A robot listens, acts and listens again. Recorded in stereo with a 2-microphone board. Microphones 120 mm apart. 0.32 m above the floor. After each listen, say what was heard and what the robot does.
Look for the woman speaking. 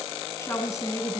The woman speaking: about 30° left or 150° left. Turn 30° left.
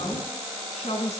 So it is at 110° left. Turn 110° left.
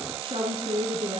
The woman speaking is now 60° right. Turn 60° right.
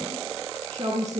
The woman speaking is now 40° right. Turn 40° right.
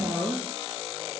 Found it: a woman speaking, straight ahead.